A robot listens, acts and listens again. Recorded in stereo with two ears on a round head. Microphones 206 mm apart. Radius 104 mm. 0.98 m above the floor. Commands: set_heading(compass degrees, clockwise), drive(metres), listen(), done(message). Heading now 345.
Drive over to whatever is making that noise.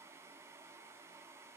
listen()
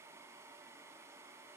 listen()
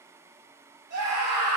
set_heading(75)
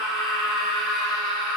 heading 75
drive(1.0)
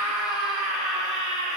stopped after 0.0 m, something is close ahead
done("Blocked. The scream is further on, straight ahead.")